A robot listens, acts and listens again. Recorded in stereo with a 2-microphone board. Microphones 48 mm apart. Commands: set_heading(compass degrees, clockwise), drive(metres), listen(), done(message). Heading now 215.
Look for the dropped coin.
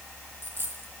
set_heading(265)
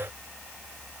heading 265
listen()
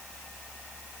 done("I heard a dropped coin, but can't make it out now. It was about straight ahead or 80° right.")